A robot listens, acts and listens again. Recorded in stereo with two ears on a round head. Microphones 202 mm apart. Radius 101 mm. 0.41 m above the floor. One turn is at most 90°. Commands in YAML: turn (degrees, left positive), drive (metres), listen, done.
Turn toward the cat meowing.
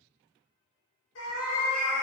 turn: 90
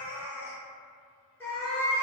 turn: 10
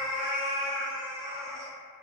done: "Found it: a cat meowing, straight ahead."